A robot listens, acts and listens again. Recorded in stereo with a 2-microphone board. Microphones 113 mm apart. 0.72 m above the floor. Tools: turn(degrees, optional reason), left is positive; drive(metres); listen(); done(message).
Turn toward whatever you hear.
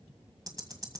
turn(degrees=-35, reason="The ticking: about 35° right or 145° right.")
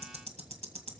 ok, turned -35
turn(degrees=-115, reason="So it is at 115° right.")
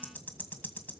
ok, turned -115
turn(degrees=15, reason="The ticking is now 15° left.")
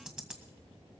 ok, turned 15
done("Found it: ticking, straight ahead, 1 to 2 m away.")